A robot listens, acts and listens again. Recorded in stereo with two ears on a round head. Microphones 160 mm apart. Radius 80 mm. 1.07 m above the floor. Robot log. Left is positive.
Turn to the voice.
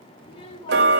note: The child speaking: about 30° left or 150° left.
cmd yaw +30
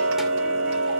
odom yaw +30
cmd idle
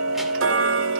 cmd idle
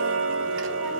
end: I heard a child speaking, but can't make it out now. It was about straight ahead or 120° left.